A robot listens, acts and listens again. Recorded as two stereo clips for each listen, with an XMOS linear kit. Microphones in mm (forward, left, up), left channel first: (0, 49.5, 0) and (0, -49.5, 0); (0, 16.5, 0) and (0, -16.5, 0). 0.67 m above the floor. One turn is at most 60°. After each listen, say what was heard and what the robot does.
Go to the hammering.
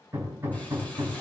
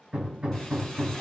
The hammering: about 25° right or 155° right. Turn 25° right.
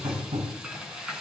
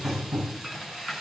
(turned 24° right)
So it is at 130° right. Turn 60° right.
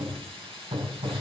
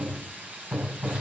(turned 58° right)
The hammering is now 70° right. Turn 60° right.
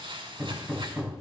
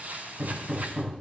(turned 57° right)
The hammering is now 10° right. Turn 10° right.
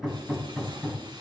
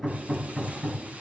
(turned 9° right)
Drive 1.0 m forward.
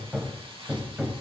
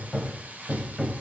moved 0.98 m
The hammering is now 10° right. Turn 10° right.
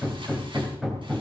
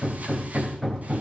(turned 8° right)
Drive 1.0 m forward.
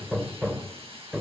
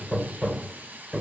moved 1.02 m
Drive 1.0 m forward.
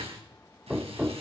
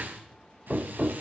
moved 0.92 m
Drive 1.0 m forward.
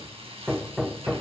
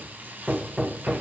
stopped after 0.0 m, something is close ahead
Arrived at the hammering, straight ahead.